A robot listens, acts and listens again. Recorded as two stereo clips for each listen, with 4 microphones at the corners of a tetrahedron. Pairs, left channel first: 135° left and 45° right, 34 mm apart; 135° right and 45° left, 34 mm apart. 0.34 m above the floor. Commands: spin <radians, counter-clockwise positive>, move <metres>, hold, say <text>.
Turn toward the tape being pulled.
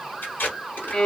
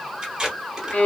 spin 2.09
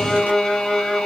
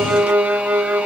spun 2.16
hold
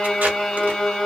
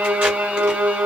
hold
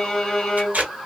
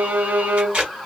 say Found it: tape being pulled, straight ahead.